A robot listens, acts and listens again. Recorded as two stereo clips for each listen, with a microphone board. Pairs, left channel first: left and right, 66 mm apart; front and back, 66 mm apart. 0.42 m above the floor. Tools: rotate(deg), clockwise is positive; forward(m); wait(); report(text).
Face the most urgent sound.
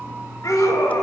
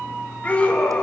rotate(-65)
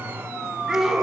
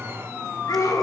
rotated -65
rotate(10)
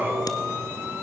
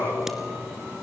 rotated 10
wait()
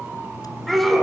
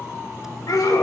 report("Found it: a scream, straight ahead, over 4 m away.")